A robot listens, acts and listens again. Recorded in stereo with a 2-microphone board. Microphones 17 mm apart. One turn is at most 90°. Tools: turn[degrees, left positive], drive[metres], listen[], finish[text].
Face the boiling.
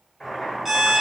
Thought: The boiling: about 20° left or 160° left.
Action: turn[20]
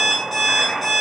Thought: So it is at 140° left.
Action: turn[90]
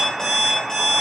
Thought: The boiling is now 80° left.
Action: turn[80]
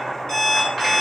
Action: finish[Found it: boiling, straight ahead.]